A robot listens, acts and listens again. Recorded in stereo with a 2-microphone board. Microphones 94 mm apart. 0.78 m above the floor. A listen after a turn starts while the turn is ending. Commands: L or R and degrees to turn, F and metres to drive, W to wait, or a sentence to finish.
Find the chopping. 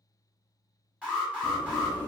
W
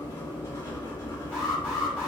W
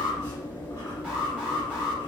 I can't make out chopping, only an alarm and writing.